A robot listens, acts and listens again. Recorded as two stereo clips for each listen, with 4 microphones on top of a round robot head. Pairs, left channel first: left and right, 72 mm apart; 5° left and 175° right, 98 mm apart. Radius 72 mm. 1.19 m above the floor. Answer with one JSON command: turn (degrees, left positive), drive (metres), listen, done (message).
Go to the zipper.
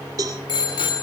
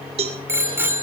{"listen": true}
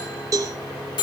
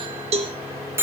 {"listen": true}
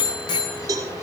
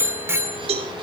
{"done": "I can't make out a zipper to turn to."}